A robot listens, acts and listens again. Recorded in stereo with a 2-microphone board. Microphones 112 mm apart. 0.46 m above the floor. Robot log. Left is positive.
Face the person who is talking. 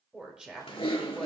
cmd yaw -30
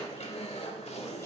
cmd idle
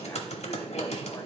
cmd idle
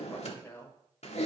note: So it is at 20° left.
cmd yaw +20
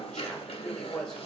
end: Found it: a woman speaking, straight ahead.